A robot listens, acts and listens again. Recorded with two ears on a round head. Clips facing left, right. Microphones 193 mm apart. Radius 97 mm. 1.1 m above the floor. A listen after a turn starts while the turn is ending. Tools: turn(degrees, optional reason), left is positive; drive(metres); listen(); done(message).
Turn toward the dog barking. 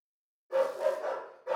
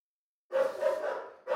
turn(degrees=25, reason="The dog barking: about 25° left or 155° left.")
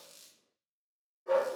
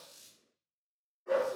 turn(degrees=125, reason="So it is at 125° left.")
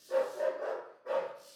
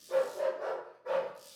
turn(degrees=-25, reason="The dog barking is now 25° right.")
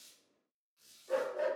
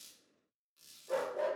done("Facing the dog barking, 1 to 2 m away.")